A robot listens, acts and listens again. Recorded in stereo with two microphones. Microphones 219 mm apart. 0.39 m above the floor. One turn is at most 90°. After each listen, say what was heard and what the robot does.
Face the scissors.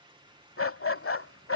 Keep listening.
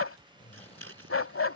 Turn 90° right.
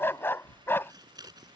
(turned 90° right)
So it is at 20° right. Turn 20° right.
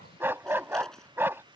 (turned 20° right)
Keep listening.
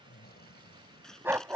Facing the scissors.